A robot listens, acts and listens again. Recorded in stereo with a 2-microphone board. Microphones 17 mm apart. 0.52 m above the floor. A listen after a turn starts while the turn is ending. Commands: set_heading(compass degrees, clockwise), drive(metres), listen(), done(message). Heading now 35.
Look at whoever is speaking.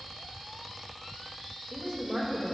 set_heading(90)
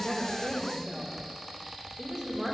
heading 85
set_heading(150)
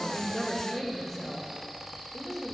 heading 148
done("Found it: a woman speaking, straight ahead.")